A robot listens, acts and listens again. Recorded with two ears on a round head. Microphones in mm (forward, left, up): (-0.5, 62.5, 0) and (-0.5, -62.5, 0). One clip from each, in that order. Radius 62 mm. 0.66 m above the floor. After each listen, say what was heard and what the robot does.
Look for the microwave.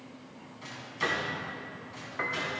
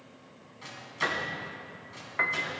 The microwave: about 20° right or 160° right. Turn 20° right.
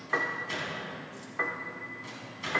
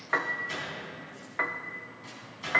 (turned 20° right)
Facing the microwave, over 4 m away.